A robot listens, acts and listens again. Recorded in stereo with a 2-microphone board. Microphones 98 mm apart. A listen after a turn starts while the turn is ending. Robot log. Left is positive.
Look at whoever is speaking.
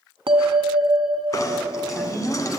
note: The woman speaking: about 20° left or 160° left.
cmd yaw +20
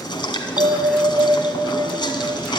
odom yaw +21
cmd idle
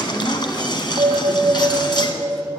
cmd idle
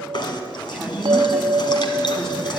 end: Facing the woman speaking.